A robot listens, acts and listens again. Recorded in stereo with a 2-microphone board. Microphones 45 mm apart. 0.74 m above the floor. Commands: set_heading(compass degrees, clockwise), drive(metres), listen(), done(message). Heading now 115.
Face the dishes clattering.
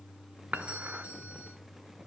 set_heading(165)
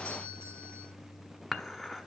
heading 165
done("Facing the dishes clattering.")